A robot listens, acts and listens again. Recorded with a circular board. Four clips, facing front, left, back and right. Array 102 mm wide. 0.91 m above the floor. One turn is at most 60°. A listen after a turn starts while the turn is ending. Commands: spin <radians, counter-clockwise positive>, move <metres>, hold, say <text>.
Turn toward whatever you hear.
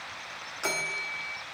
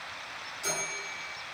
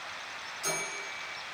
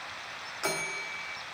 spin -0.79
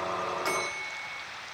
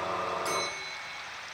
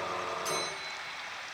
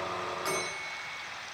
hold
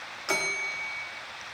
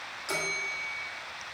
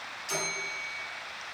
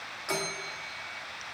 spin -0.26
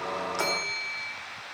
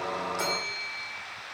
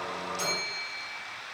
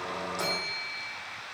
say Found it: a bell, straight ahead.